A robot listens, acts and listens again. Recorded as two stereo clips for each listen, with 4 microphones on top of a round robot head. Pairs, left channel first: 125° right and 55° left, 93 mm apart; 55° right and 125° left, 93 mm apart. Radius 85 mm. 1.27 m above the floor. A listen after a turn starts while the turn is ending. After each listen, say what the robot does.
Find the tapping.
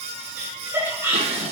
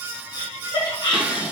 Keep listening.
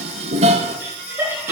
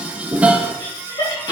Keep listening.
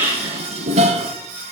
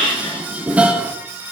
I can't make out tapping, only laughter and dishes clattering.